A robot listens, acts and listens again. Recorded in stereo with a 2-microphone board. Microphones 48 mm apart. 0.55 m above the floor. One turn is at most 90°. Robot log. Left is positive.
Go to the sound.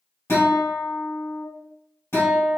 note: The guitar: about 70° left or 110° left.
cmd yaw +70
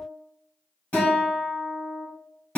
note: So it is at 30° left.
cmd yaw +30
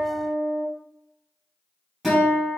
cmd fwd 1.0
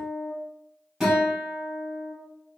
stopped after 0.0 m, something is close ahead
note: The guitar is now 10° right.
cmd yaw -10
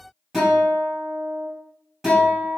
end: Blocked. The guitar is further on, straight ahead.